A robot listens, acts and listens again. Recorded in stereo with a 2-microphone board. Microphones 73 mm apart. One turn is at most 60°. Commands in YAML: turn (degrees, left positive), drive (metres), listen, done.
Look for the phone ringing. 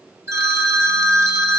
turn: -40
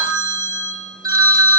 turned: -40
turn: -60
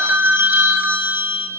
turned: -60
turn: -25
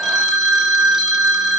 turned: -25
done: "Found it: a phone ringing, straight ahead."